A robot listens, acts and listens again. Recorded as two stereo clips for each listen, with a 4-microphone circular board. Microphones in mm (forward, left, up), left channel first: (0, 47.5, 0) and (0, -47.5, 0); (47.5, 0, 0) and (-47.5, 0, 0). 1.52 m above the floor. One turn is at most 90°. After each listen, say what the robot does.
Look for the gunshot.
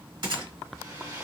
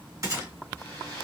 Turn 90° right.
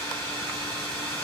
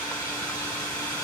Turn 35° right.
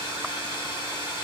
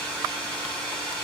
I heard a gunshot from this way, but can't make it out now.